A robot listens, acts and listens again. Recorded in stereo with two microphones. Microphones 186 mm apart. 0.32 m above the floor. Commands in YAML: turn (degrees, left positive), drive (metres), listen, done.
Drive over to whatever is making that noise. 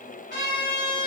turn: 65
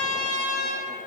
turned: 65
turn: 40
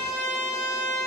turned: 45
drive: 1.0
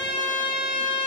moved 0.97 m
drive: 1.0
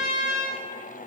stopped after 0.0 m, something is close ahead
done: "I am next to the trumpet."